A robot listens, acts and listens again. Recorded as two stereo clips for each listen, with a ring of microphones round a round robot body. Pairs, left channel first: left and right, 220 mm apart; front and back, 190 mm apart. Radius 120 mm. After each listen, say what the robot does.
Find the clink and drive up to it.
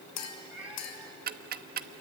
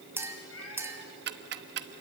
Turn 100° left.
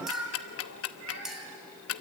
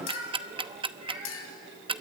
Drive 1.0 m forward.
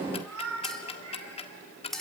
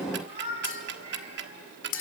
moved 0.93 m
Drive 1.0 m forward.
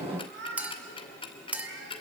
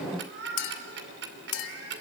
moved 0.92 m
Drive 1.0 m forward.
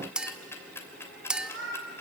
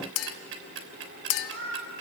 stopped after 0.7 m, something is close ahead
I am next to the clink.